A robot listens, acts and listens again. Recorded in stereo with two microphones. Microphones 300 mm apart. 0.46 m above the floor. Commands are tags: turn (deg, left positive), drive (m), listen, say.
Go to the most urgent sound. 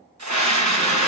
<turn deg="-70"/>
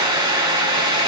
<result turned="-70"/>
<turn deg="-15"/>
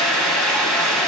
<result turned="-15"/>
<drive m="1.0"/>
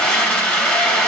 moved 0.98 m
<drive m="1.0"/>
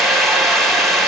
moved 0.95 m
<drive m="1.0"/>
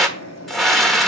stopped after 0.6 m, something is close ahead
<say>I am next to the scream.</say>